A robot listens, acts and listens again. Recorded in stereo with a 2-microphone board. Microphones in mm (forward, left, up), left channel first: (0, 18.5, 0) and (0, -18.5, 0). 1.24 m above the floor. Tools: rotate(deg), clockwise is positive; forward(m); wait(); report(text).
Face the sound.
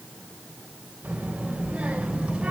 rotate(25)
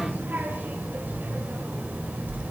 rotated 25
rotate(40)
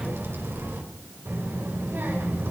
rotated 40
rotate(115)
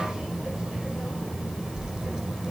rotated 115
rotate(15)
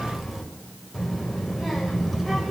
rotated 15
report("Facing the child speaking, over 4 m away.")